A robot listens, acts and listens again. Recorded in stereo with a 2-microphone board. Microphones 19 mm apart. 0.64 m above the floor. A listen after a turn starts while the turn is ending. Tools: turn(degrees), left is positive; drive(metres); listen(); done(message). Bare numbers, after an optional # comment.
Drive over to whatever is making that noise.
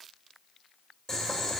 # The boiling: about 25° left or 155° left.
turn(25)
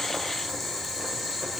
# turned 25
drive(1.0)
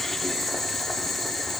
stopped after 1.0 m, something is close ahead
# The boiling is now 10° left.
turn(10)
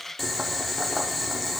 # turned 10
done("Arrived at the boiling, straight ahead.")